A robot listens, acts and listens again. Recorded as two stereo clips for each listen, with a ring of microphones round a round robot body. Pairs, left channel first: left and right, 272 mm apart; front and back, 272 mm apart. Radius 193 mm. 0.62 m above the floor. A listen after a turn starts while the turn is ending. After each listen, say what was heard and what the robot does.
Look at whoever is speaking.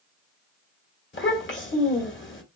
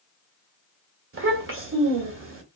The child speaking: 140° left. Turn 140° left.
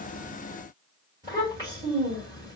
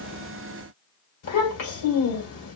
The child speaking is now 10° right. Turn 10° right.
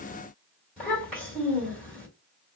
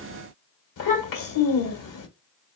Found it: a child speaking, straight ahead.